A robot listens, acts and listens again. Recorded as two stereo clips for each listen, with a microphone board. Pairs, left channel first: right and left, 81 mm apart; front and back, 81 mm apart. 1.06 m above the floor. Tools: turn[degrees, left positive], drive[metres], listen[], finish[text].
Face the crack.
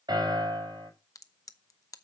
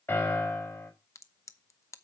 Thought: The crack: 50° right.
Action: turn[-50]
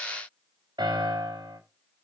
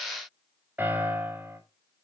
Action: finish[I heard a crack from this way, but can't make it out now.]